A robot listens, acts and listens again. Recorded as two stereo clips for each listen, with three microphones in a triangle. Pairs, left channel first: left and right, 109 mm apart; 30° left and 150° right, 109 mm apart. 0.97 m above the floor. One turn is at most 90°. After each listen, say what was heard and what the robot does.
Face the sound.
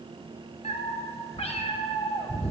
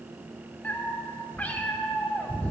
The cat meowing: 105° left. Turn 90° left.
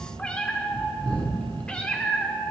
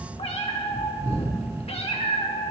The cat meowing is now 10° left. Turn 10° left.
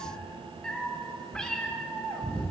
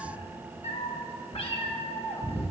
The cat meowing is now 10° left. Turn 10° left.
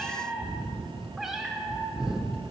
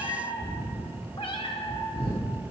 Facing the cat meowing.